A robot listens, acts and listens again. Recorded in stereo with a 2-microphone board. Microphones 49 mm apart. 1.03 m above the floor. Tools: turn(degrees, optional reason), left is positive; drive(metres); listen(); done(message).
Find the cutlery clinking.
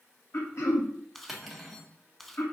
turn(degrees=-30)
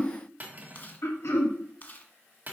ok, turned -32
turn(degrees=-145, reason="So it is at 145° right.")
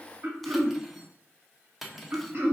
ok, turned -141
done("Facing the cutlery clinking.")